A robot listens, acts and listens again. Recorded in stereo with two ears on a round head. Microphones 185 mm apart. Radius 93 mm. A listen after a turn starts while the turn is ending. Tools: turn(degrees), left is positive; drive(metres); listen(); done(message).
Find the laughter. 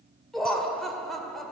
turn(degrees=30)
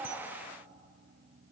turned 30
listen()
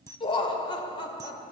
turn(degrees=145)
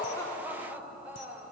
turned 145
turn(degrees=-10)
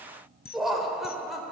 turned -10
done("Found it: laughter, straight ahead, 2 to 4 m away.")